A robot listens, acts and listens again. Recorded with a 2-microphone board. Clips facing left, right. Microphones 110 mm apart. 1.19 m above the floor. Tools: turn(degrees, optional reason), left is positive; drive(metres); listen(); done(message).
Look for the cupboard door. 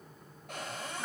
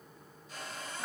turn(degrees=70, reason="The cupboard door: about 70° left or 110° left.")
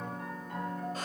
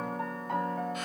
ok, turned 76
listen()
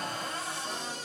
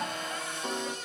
turn(degrees=35, reason="So it is at 35° left.")
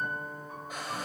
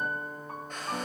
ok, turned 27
turn(degrees=10, reason="The cupboard door is now 10° left.")
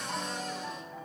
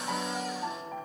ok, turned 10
listen()
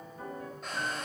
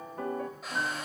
done("Facing the cupboard door, 2 to 4 m away.")